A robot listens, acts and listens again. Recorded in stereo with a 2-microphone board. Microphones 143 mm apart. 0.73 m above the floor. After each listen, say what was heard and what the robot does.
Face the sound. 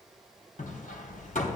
The hammering: about 70° left or 110° left. Turn 70° left.
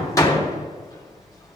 So it is at 25° left. Turn 25° left.
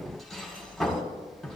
Found it: hammering, straight ahead.